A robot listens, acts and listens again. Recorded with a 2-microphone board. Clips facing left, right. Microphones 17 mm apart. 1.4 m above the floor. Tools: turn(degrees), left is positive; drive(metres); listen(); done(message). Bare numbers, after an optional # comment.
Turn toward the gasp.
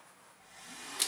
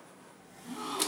# The gasp: about 55° right or 125° right.
turn(-55)
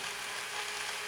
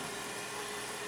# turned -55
listen()
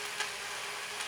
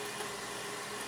done("I heard a gasp, but can't make it out now. It was about straight ahead or 70° right.")